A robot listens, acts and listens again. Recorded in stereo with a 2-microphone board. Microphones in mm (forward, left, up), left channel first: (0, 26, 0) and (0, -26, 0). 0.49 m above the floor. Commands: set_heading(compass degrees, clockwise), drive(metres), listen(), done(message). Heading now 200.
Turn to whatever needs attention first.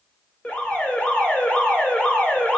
set_heading(175)
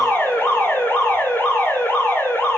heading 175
set_heading(50)
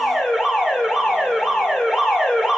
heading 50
set_heading(60)
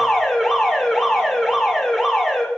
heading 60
done("Facing the alarm, 2 to 4 m away.")